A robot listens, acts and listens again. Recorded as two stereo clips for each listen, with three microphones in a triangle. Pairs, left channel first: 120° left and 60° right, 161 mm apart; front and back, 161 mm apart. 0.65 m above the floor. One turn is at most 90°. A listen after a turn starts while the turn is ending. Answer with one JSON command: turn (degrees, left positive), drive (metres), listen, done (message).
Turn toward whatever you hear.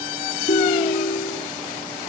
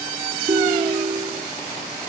{"turn": 90}
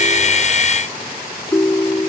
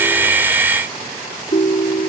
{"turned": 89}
{"turn": 45}
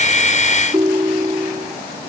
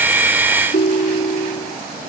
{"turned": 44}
{"done": "Found it: a ringtone, straight ahead."}